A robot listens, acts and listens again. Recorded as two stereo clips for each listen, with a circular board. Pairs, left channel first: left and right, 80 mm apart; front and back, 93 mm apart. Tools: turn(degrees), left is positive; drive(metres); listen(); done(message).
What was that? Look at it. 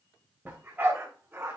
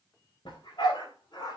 turn(degrees=-30)
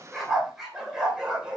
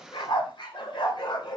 turn(degrees=-15)
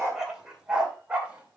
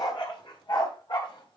turn(degrees=-15)
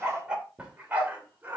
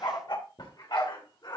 turn(degrees=-25)
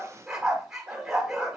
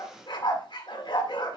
done("Facing the dog barking.")